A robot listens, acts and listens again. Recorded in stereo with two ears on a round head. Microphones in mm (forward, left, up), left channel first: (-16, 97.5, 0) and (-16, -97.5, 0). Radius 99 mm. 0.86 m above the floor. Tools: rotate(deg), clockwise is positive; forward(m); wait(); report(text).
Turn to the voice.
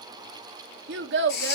rotate(60)
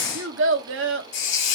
rotate(60)
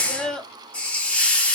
report("Facing the child speaking.")